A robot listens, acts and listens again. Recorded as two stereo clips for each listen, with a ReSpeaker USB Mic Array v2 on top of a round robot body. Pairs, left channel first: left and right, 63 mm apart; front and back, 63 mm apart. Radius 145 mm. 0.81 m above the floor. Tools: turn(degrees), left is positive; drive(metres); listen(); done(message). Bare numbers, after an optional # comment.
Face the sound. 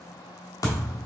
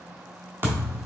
# The thud: 125° left.
turn(125)
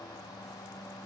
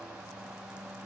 done("I heard a thud from this way, but can't make it out now.")